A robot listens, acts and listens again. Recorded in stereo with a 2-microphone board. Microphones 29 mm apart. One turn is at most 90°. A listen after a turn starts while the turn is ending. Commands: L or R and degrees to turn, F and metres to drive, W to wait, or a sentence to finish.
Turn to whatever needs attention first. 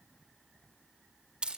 W
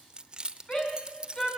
L30
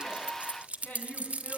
L90
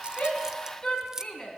L30
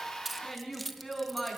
Found it: a shout, straight ahead, over 4 m away.